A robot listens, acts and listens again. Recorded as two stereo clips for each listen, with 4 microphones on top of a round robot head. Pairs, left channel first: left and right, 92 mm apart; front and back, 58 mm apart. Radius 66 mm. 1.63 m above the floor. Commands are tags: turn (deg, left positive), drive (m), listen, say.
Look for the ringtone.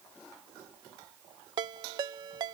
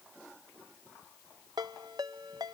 <turn deg="-130"/>
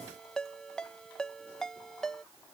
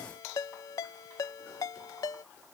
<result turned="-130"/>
<say>Found it: a ringtone, straight ahead.</say>